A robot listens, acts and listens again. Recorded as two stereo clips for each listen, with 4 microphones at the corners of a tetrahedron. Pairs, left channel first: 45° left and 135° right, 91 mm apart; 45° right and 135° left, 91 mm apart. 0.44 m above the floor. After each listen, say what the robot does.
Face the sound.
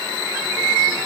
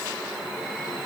Keep listening.
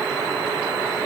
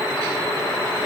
Keep listening.
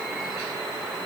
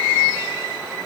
I can't make out anything.